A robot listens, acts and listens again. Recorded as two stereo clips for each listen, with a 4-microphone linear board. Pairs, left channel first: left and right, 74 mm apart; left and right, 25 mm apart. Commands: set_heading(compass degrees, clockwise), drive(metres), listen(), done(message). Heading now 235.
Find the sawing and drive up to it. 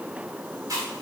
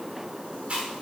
listen()
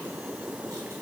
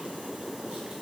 listen()
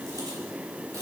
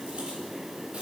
done("I can't make out sawing to turn to.")